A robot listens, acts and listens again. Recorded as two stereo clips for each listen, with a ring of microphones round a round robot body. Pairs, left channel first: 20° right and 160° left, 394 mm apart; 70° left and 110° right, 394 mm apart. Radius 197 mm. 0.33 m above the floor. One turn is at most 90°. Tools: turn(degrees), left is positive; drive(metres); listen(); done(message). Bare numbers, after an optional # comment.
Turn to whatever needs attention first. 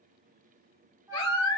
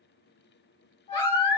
# The baby crying: 35° left.
turn(35)
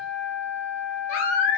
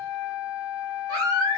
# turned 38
done("Found it: a baby crying, straight ahead.")